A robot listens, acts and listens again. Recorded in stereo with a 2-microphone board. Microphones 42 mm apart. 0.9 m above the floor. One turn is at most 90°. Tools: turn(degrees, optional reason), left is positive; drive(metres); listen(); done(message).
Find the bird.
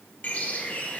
turn(degrees=40, reason="The bird: about 40° left or 140° left.")
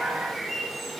done("Facing the bird.")